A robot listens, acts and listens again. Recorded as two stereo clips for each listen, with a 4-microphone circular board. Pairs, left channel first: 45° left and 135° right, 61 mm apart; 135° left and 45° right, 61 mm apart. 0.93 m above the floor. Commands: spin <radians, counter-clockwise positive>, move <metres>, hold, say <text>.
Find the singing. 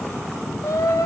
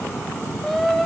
spin 0.79
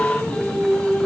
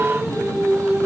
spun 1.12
spin -0.52
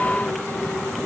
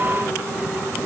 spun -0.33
spin -0.17
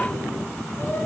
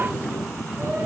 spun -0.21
hold
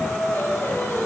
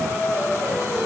say Facing the singing.